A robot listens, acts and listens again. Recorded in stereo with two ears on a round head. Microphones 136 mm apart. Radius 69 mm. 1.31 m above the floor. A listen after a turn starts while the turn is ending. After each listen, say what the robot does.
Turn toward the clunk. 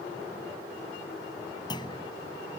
Turn 30° left.
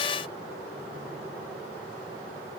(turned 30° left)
Keep listening.
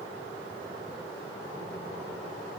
I heard a clunk, but can't make it out now. It was about straight ahead or 120° left.